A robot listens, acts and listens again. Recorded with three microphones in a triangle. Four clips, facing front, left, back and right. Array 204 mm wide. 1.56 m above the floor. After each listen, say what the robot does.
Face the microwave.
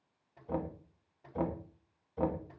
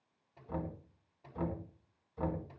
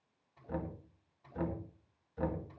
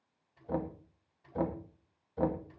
Turn 40° left.
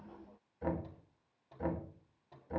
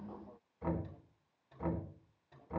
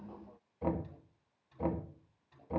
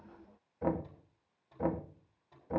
Found it: a microwave, straight ahead.